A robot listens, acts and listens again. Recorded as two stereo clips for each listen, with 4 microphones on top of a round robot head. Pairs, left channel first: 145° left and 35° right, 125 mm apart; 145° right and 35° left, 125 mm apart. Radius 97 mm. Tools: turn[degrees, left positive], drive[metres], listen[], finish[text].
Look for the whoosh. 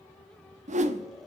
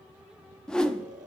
Thought: The whoosh: 60° right.
Action: turn[-60]
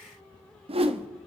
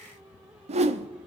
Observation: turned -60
Action: finish[Facing the whoosh.]